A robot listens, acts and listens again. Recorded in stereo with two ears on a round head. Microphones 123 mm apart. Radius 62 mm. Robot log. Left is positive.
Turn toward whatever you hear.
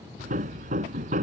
note: The hammering: about 60° right or 120° right.
cmd yaw -60
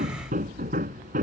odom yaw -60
note: So it is at 60° right.
cmd yaw -60
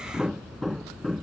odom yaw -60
end: Facing the hammering.